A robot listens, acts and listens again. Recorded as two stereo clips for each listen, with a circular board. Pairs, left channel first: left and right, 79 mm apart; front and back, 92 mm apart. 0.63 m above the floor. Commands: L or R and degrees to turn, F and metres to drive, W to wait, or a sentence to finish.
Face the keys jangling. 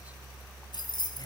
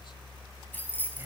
L70
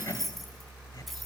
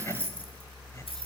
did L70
Found it: keys jangling, straight ahead, over 4 m away.